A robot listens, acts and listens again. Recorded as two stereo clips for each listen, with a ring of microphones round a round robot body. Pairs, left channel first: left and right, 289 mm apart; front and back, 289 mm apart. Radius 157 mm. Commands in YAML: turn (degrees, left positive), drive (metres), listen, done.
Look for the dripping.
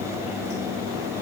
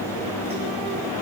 listen: true
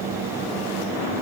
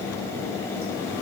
listen: true
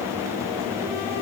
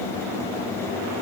done: "I can't make out dripping to turn to."